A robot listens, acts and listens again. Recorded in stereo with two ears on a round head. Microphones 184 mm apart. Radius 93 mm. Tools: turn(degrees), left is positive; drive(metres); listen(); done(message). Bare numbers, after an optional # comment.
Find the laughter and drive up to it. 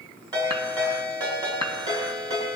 listen()
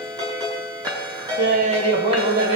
# The laughter: about 60° right or 120° right.
turn(-60)
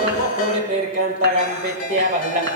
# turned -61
# So it is at 45° right.
turn(-45)
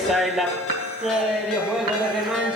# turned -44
drive(1.0)
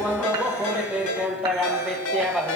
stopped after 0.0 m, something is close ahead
done("Blocked. The laughter is further on, straight ahead.")